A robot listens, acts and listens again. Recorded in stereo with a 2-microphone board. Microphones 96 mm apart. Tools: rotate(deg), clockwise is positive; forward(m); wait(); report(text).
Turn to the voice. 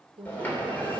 rotate(75)
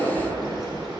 wait()
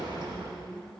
report("Found it: a woman speaking, straight ahead, 2 to 4 m away.")